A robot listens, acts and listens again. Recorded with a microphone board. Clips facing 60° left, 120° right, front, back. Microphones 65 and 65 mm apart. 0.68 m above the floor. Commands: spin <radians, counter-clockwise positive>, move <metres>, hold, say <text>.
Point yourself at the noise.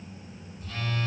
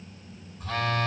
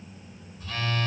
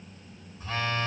spin -2.01
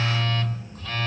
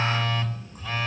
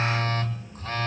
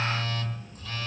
spin -0.79
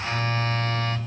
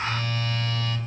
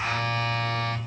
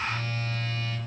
spin 0.17
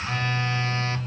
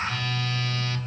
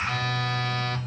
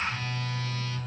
say Facing the phone buzzing, 1 to 2 m away.